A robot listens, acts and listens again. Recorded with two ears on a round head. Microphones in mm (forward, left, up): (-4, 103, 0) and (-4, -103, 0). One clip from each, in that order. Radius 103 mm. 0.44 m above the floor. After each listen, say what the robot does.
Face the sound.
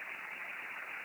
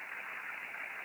Keep listening.
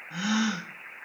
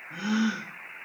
Turn 90° left.
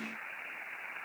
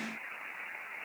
Facing where the gasp came from. I can't hear it now.